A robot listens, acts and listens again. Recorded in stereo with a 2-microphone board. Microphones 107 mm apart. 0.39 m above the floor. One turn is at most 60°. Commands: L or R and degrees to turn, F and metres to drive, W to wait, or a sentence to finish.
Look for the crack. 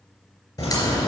L35
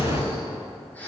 L60
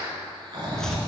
L50
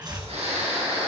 Facing where the crack came from. I can't hear it now.